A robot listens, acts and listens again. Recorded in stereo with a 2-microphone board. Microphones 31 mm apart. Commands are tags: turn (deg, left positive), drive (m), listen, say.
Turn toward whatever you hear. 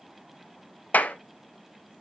<turn deg="65"/>
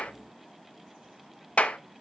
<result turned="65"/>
<turn deg="45"/>
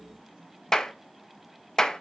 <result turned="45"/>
<turn deg="15"/>
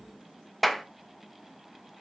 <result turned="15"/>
<say>Facing the clap, under 1 m away.</say>